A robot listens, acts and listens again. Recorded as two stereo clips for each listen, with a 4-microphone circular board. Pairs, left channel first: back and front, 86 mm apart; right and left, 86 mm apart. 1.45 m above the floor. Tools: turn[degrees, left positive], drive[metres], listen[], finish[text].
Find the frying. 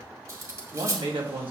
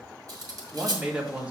Action: listen[]
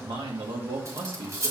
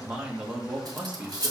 Action: listen[]
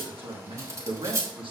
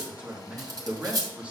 Action: finish[I can't make out frying to turn to.]